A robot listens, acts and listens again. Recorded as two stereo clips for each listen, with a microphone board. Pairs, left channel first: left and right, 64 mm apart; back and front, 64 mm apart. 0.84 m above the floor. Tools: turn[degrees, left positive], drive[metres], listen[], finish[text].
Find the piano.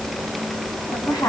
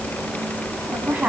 Action: listen[]
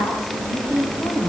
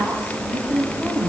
Action: listen[]
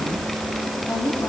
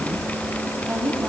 Action: finish[I can't make out a piano to turn to.]